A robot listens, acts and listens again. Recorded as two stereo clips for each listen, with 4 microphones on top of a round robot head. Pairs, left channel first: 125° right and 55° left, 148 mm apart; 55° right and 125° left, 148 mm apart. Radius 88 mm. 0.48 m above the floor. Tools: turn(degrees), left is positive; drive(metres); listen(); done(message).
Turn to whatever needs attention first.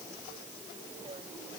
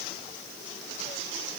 listen()
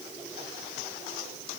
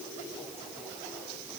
listen()
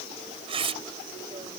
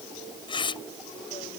done("I can't make out anything urgent, only tearing paper.")